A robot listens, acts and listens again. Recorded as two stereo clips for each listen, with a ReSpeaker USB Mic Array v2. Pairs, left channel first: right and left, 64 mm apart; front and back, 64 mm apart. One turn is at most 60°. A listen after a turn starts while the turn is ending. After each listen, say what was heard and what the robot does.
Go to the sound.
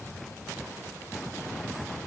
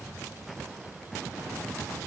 Keep listening.
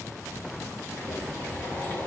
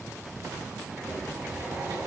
The boiling: 150° right. Turn 60° right.
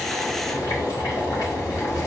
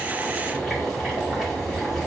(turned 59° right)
The boiling is now 90° right. Turn 60° right.
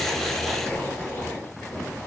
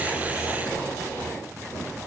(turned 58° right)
The boiling is now 35° right. Turn 35° right.
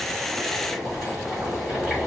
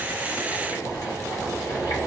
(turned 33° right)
Drive 1.0 m forward.
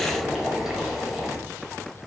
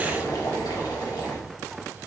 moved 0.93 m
Drive 1.0 m forward.
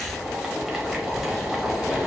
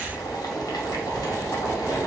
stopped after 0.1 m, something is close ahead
I am next to the boiling.